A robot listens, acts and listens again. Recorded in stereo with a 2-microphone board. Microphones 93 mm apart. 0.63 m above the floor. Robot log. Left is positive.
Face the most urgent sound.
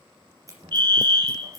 note: The fire alarm: about 55° right or 125° right.
cmd yaw -55
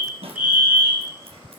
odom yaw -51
note: So it is at 20° right.
cmd yaw -20
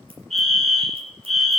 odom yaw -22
end: Facing the fire alarm.